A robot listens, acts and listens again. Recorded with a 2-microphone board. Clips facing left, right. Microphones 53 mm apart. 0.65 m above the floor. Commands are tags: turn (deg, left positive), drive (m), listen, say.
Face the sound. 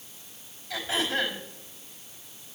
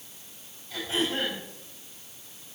<turn deg="65"/>
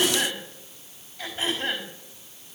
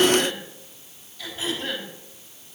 <turn deg="45"/>
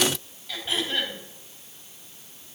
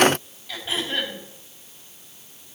<say>Found it: throat clearing, straight ahead.</say>